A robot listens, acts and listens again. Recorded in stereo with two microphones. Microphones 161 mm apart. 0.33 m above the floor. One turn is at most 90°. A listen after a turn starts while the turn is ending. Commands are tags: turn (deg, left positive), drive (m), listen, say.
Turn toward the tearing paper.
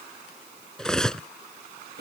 <listen/>
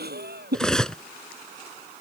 <listen/>
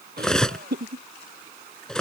<say>I can't make out tearing paper, only laughter and cutlery clinking.</say>